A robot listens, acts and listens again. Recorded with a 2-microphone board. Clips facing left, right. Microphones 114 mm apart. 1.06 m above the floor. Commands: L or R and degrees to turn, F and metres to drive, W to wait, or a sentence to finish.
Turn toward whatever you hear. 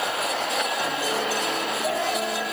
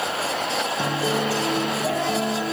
R25
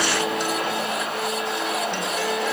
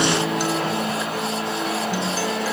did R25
Facing the guitar, 2 to 4 m away.